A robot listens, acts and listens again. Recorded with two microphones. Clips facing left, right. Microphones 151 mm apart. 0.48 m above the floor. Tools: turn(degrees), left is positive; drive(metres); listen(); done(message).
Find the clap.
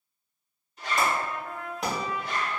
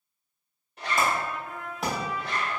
turn(degrees=30)
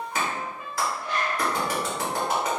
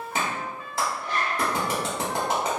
turn(degrees=-30)
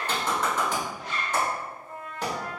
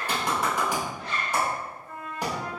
turn(degrees=-15)
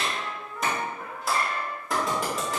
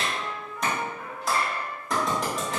done("Found it: a clap, straight ahead.")